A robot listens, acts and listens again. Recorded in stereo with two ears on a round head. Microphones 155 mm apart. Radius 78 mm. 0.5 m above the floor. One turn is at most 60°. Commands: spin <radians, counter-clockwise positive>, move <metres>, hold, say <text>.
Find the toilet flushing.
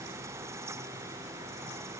hold
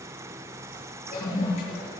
spin 0.70
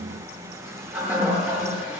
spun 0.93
spin -0.17
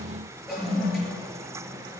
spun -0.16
say Found it: a toilet flushing, straight ahead.